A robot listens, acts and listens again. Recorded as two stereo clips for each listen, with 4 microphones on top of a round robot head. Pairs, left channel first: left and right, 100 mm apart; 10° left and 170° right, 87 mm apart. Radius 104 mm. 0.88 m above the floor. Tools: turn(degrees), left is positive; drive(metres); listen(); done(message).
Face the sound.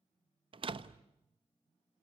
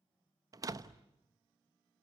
turn(degrees=-120)
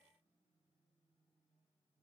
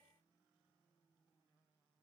done("I heard a door slam from this way, but can't make it out now.")